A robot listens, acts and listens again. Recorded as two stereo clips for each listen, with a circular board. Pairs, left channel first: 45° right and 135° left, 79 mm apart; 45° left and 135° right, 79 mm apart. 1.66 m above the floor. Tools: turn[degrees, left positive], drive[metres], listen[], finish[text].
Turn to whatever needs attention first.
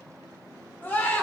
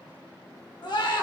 Thought: The scream: 20° left.
Action: turn[20]
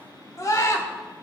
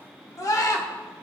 Action: finish[Found it: a scream, straight ahead, 2 to 4 m away.]